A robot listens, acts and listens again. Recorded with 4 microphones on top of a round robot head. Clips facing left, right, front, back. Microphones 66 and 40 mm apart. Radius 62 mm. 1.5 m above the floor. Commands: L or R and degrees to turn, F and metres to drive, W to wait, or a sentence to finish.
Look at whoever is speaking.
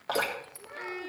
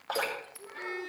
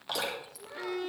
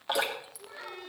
L60
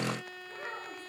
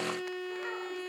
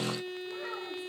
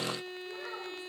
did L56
W
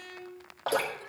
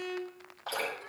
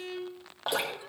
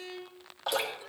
R10
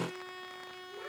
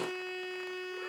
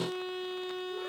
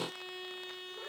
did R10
W
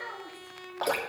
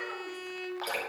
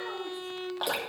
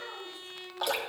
Found it: a child speaking, straight ahead, 2 to 4 m away.